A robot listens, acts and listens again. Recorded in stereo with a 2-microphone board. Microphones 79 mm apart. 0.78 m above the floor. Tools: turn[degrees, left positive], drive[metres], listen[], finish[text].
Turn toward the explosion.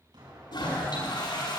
Action: turn[-90]
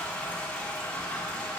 Action: finish[I heard an explosion from this way, but can't make it out now.]